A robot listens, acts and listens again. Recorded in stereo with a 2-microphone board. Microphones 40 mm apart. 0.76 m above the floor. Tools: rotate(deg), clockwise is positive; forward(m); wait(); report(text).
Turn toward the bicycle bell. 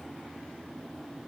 wait()
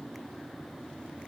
wait()
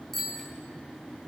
rotate(-30)
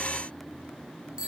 rotate(25)
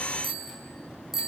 rotate(10)
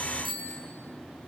report("Found it: a bicycle bell, straight ahead.")